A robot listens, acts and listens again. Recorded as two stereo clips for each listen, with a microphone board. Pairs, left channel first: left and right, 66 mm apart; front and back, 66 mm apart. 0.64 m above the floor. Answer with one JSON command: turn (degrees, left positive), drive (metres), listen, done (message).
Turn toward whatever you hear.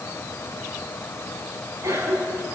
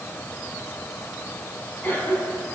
{"turn": -60}
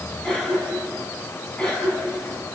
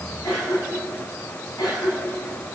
{"turn": 10}
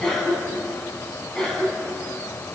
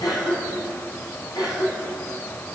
{"done": "Found it: a cough, straight ahead."}